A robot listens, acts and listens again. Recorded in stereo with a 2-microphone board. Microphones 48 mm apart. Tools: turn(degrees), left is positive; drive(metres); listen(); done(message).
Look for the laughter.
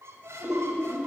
turn(degrees=-40)
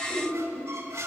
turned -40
done("Found it: laughter, straight ahead, 2 to 4 m away.")